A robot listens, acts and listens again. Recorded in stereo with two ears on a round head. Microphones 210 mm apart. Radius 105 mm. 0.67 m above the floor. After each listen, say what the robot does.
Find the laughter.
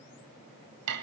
Keep listening.
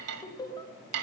Turn 15° left.
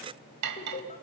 Turn 150° left.
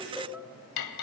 Found it: laughter, straight ahead, 2 to 4 m away.